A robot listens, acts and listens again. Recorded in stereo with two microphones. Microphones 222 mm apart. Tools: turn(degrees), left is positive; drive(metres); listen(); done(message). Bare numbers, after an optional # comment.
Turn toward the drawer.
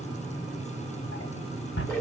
# The drawer: about 65° left or 115° left.
turn(65)
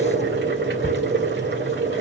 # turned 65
listen()
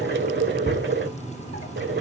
listen()
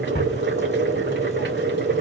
# So it is at 45° left.
turn(45)
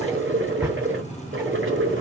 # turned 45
listen()
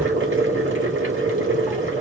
listen()
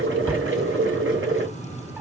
done("Facing where the drawer came from. I can't hear it now.")